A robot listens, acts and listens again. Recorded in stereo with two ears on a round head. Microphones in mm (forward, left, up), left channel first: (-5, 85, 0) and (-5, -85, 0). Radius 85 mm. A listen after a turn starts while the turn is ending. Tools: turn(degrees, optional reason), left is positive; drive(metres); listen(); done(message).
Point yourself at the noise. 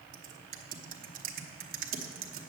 turn(degrees=-45, reason="The typing on a keyboard: about 45° right or 135° right.")
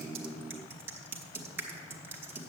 turn(degrees=-15, reason="So it is at 15° right.")
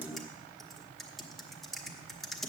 done("Facing the typing on a keyboard, 1 to 2 m away.")